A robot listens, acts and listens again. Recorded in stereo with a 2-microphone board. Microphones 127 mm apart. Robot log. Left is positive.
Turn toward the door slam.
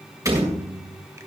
note: The door slam: about 25° right or 155° right.
cmd yaw -25
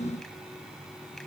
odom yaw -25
cmd idle
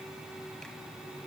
end: I heard a door slam, but can't make it out now. It was about straight ahead or 130° right.